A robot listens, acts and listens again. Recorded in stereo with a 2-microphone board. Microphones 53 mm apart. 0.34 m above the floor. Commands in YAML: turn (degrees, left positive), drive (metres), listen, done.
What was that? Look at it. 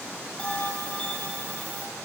turn: 20
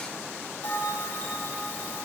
turn: 140
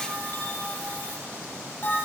turn: 40
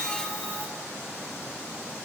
listen: true
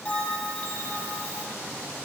turn: 25
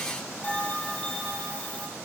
turn: 25
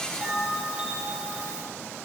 turn: -15
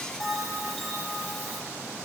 done: "Facing the bell."